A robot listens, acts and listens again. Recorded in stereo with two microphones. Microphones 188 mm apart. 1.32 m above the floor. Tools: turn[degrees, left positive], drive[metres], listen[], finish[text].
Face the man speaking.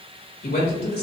Thought: The man speaking: about 60° left or 120° left.
Action: turn[60]
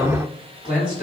Thought: So it is at 50° left.
Action: turn[50]
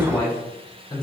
Thought: The man speaking is now 25° left.
Action: turn[25]
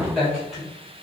Action: finish[Facing the man speaking.]